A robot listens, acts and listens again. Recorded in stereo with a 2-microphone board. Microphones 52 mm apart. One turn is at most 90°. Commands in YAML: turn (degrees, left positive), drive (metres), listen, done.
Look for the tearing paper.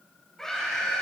listen: true
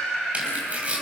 turn: -25
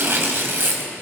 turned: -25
turn: -90
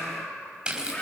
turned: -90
turn: -20
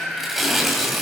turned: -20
done: "Facing the tearing paper, over 4 m away."